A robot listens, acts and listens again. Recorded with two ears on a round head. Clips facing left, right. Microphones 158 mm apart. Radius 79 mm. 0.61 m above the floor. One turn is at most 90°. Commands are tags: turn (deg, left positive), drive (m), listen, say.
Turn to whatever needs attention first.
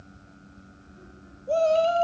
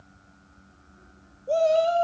<turn deg="-30"/>
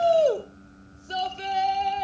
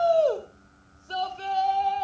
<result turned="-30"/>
<turn deg="20"/>
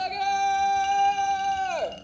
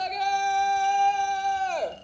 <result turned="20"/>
<say>Found it: a shout, straight ahead, 2 to 4 m away.</say>